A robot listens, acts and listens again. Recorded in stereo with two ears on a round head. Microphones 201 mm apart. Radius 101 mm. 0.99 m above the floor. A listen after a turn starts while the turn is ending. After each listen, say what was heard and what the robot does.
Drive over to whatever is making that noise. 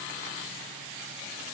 Keep listening.
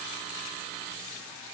Keep listening.
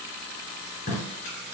The tape being pulled: about 45° left or 135° left. Turn 45° left.
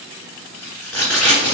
Drive 1.0 m forward.
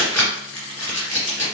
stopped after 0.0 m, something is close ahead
The tape being pulled is now 10° left. Turn 10° left.
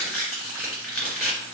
Something is in my way. I am facing the tape being pulled but have not reached it.